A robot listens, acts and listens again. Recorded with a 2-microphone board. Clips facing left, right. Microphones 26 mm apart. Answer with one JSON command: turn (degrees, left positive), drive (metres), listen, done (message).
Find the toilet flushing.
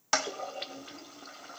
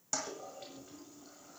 {"turn": 65}
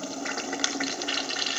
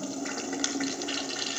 {"turn": 25}
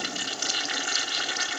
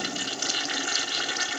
{"done": "Found it: a toilet flushing, straight ahead, 1 to 2 m away."}